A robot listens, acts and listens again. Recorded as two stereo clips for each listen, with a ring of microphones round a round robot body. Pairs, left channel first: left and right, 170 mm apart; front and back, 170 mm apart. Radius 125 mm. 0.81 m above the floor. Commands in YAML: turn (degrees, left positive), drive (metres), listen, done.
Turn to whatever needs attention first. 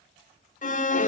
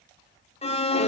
turn: 50
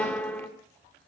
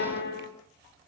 done: "Found it: an alarm, straight ahead, 2 to 4 m away."